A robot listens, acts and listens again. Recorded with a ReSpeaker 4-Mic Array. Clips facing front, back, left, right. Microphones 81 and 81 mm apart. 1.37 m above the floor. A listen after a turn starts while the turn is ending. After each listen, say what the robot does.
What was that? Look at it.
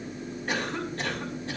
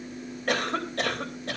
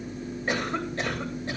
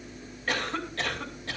Turn 160° left.
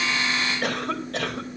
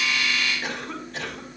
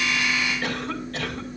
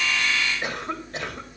Turn 20° right.
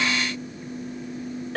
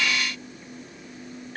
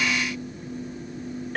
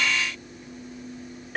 Facing the cough.